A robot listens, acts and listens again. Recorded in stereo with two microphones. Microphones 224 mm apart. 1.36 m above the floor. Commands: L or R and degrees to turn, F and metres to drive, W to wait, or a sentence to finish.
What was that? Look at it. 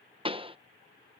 R25
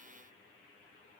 W
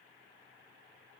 I heard a pop, but can't make it out now. It was about straight ahead or 130° right.